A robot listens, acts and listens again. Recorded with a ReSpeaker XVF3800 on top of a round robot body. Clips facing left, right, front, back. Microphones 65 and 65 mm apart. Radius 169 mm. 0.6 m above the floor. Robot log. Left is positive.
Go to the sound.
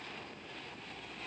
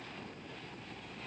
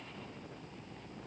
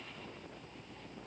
cmd idle
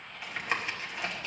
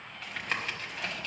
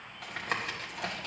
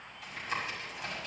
note: The tapping: 15° left.
cmd yaw +15
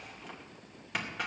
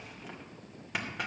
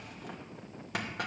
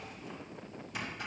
cmd fwd 1.0
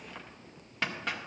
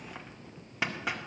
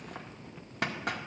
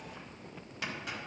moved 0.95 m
note: The tapping is now 10° right.
cmd yaw -10
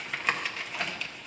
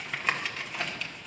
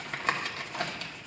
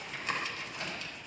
cmd fwd 1.0
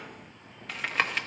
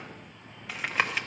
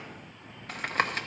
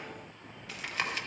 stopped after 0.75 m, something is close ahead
end: Arrived at the tapping, straight ahead.